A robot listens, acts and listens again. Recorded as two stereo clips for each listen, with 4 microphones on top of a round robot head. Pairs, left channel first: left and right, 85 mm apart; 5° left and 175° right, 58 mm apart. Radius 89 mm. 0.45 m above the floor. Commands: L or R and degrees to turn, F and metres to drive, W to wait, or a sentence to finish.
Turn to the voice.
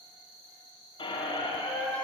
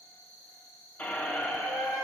W
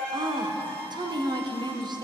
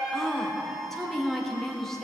R80
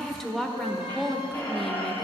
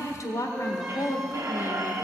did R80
Facing the woman speaking, 1 to 2 m away.